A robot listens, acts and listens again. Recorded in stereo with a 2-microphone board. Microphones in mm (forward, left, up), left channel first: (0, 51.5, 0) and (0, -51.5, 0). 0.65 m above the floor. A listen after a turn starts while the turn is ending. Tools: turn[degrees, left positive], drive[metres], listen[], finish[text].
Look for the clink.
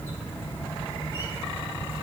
Action: listen[]
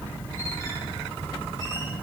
Action: listen[]
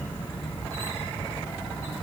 Action: finish[I can't make out a clink.]